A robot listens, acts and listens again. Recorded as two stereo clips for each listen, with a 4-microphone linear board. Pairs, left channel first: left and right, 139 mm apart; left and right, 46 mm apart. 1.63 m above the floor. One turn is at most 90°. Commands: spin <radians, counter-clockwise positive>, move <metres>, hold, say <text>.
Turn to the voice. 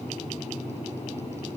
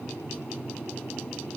hold
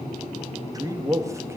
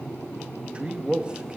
spin -0.44
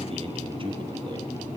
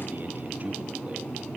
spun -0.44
hold
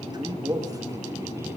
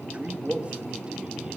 spin -0.44
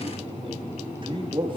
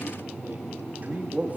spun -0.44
spin -0.61
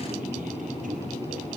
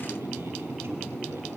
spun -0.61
hold
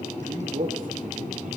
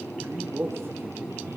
spin -1.57
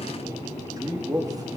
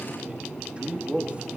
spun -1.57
spin -0.44
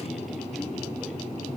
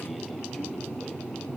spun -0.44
hold
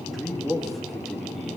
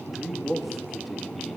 say Facing the man speaking.